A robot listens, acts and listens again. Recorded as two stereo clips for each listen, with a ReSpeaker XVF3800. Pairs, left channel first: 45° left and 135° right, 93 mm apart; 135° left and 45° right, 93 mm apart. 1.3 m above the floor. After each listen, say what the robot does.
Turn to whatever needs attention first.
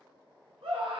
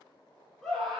Turn 140° right.
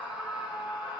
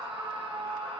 Turn 55° right.
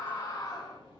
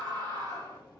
Found it: a scream, straight ahead.